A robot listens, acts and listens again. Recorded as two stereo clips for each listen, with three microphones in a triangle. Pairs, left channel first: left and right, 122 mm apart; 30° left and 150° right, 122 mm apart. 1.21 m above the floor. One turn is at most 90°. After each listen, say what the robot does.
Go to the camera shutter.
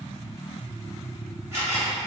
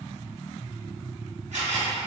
Turn 90° right.
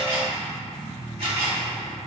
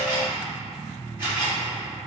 Turn 80° right.
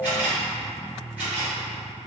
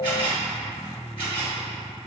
Turn 10° right.
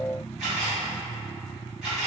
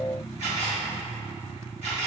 Drive 1.0 m forward.
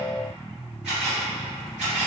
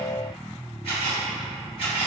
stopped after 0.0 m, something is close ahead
Turn 10° right.
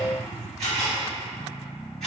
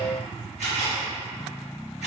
Blocked. The camera shutter is further on, straight ahead.